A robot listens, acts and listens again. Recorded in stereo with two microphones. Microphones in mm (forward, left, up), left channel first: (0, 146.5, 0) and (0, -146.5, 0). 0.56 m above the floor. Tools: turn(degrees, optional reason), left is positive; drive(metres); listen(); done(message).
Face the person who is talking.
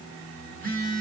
listen()
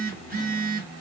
listen()
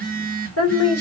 turn(degrees=55, reason="The woman speaking: about 55° left or 125° left.")
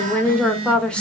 done("Facing the woman speaking.")